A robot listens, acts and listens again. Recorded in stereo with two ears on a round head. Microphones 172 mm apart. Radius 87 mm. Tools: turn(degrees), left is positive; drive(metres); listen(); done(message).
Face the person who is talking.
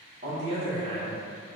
turn(degrees=-30)
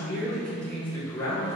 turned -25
turn(degrees=15)
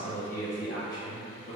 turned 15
turn(degrees=30)
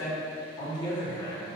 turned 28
turn(degrees=30)
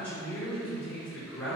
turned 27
turn(degrees=10)
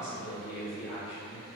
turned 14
done("Found it: a man speaking, straight ahead, 1 to 2 m away.")